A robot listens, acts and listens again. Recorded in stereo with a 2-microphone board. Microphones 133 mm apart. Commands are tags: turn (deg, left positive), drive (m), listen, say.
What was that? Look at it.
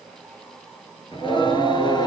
<turn deg="35"/>
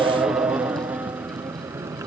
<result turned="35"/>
<turn deg="-25"/>
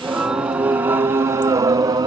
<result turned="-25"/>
<turn deg="-30"/>
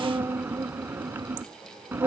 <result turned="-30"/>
<turn deg="-15"/>
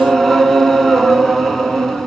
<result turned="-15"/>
<say>Facing the singing.</say>